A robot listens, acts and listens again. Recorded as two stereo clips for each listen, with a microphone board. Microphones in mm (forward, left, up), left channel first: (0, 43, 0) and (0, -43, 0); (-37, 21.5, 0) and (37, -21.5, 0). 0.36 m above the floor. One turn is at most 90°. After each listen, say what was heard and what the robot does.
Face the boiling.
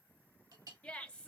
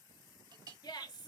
Keep listening.
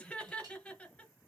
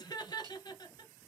Keep listening.
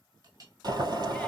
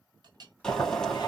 The boiling: 130° right. Turn 90° right.
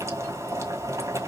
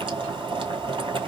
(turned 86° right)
The boiling is now 40° right. Turn 40° right.
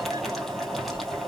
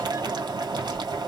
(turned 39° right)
Found it: boiling, straight ahead, 1 to 2 m away.